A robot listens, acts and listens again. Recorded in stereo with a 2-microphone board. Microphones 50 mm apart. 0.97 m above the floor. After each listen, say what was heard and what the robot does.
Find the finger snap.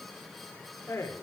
Keep listening.
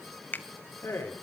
The finger snap: about 40° left or 140° left. Turn 40° left.
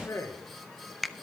Found it: a finger snap, straight ahead.